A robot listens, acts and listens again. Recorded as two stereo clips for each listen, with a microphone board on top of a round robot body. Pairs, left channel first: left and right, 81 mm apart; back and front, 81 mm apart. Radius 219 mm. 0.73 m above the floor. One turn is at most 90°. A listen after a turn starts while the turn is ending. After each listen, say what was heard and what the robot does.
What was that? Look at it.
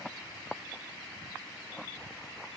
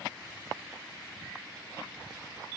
Keep listening.
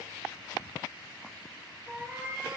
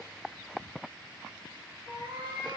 The cat meowing: 30° right. Turn 30° right.
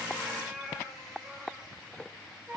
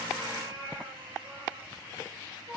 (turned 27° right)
Facing the cat meowing.